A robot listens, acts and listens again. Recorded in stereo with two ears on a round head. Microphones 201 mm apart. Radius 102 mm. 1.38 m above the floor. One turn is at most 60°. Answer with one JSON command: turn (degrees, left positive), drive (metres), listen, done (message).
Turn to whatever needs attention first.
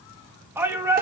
{"turn": -30}
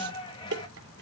{"turn": 20}
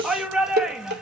{"done": "Facing the shout."}